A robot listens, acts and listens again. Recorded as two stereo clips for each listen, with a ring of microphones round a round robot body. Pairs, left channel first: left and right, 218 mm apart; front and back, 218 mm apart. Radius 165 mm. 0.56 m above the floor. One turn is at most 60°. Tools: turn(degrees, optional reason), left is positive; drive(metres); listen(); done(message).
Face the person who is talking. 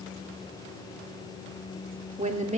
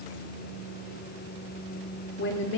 turn(degrees=-30, reason="The woman speaking: 30° right.")
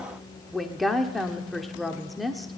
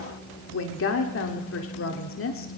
done("Facing the woman speaking.")